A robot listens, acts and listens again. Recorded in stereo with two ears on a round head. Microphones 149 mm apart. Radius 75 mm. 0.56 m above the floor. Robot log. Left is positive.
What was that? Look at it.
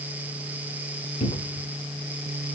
note: The cupboard door: about 35° left or 145° left.
cmd yaw +35
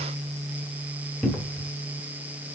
end: Found it: a cupboard door, straight ahead, 1 to 2 m away.